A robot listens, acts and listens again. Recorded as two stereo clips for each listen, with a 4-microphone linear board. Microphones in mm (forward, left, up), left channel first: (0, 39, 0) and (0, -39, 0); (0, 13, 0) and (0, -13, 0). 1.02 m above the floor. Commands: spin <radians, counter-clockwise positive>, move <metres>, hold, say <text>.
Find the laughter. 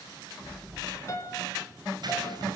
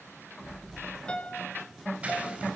hold
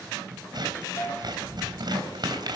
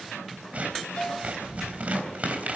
hold
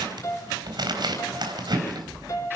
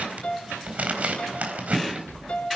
say I can't make out laughter, only scissors and a piano.